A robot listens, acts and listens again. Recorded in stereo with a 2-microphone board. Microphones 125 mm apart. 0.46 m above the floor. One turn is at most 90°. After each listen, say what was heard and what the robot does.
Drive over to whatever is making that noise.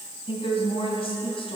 The woman speaking: about 50° left or 130° left. Turn 50° left.
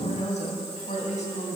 So it is at 80° left. Turn 80° left.
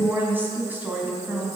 The woman speaking is now 15° right. Turn 15° right.
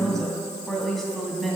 Drive 1.0 m forward.
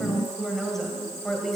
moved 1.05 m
Drive 1.0 m forward.
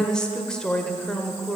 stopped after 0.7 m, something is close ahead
The woman speaking is now 10° left. Turn 10° left.
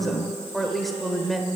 I am next to the woman speaking.